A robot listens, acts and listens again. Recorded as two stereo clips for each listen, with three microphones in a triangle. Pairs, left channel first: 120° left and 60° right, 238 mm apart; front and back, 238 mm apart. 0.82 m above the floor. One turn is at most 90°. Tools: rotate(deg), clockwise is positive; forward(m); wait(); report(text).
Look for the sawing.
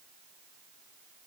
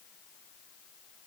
wait()
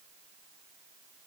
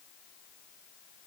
wait()
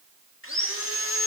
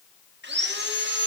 rotate(-90)
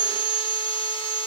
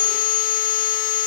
rotate(-55)
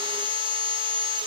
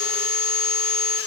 report("Found it: sawing, straight ahead.")